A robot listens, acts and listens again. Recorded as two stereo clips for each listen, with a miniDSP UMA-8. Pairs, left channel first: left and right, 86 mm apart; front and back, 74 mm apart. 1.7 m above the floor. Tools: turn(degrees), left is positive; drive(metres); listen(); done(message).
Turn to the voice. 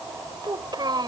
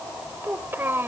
turn(degrees=-120)
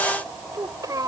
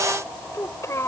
turn(degrees=-50)
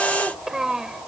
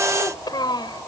turn(degrees=-10)
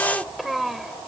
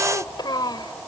done("Facing the child speaking.")